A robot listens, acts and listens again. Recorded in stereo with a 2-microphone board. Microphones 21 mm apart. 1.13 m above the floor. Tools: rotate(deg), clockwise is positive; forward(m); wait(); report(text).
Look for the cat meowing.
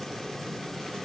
wait()
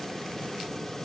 wait()
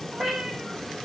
rotate(25)
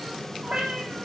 rotate(130)
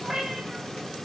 rotate(25)
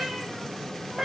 rotate(10)
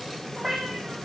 report("Found it: a cat meowing, straight ahead, over 4 m away.")